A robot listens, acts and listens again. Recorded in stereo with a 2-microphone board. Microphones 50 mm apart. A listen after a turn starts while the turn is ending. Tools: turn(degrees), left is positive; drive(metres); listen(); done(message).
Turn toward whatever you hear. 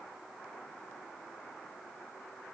listen()
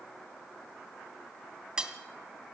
turn(degrees=-20)
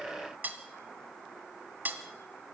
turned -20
turn(degrees=-140)
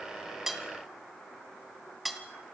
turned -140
done("Found it: cutlery clinking, straight ahead.")